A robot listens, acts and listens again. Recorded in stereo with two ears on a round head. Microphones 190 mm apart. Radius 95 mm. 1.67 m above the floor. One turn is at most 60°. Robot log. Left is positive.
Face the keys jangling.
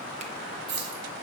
note: The keys jangling: about 55° right or 125° right.
cmd yaw -55
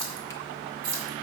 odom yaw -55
note: So it is at 65° right.
cmd yaw -60
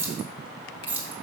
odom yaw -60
note: The keys jangling is now 10° right.
cmd yaw -10
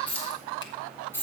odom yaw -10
note: The keys jangling is now 10° left.
cmd yaw +10
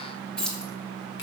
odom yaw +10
end: Facing the keys jangling, 2 to 4 m away.